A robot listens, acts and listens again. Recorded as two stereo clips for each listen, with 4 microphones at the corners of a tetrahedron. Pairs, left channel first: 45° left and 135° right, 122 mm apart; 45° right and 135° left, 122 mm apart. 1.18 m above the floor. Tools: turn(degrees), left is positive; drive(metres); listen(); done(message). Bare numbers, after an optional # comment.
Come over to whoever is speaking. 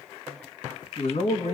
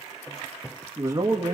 # The man speaking: 70° left.
turn(70)
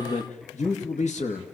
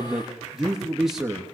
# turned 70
# The man speaking is now 45° left.
turn(45)
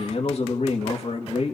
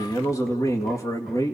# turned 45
# The man speaking is now 15° left.
turn(15)
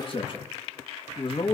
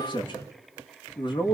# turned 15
drive(1.0)
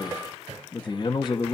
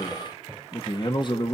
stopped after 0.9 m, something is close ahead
done("I am next to the man speaking.")